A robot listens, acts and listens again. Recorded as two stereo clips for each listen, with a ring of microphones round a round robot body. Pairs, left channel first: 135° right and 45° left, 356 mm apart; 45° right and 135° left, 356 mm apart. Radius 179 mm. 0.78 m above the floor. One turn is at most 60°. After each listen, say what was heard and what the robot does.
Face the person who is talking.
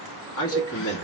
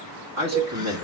The man speaking: 175° left. Turn 60° left.
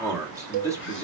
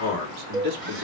The man speaking is now 125° left. Turn 60° left.
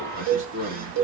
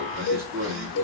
The man speaking is now 70° left. Turn 60° left.
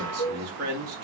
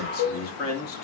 Found it: a man speaking, straight ahead.